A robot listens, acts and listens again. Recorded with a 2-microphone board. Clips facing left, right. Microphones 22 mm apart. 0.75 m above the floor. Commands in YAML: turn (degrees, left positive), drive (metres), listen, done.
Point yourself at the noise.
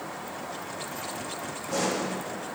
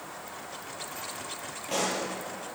turn: -75
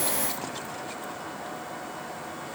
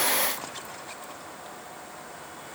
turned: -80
listen: true
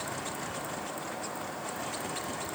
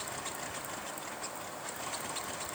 done: "I heard a pop, but can't make it out now. It was about 5° left or 25° right."